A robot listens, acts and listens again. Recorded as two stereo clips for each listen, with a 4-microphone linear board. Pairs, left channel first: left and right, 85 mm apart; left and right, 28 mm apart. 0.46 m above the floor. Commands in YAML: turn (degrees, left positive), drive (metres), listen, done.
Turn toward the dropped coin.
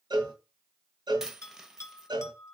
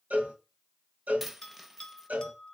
turn: -30
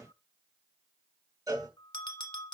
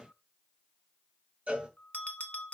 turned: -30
listen: true
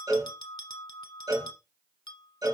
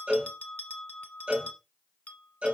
done: "I heard a dropped coin, but can't make it out now. It was about 25° left or 145° right."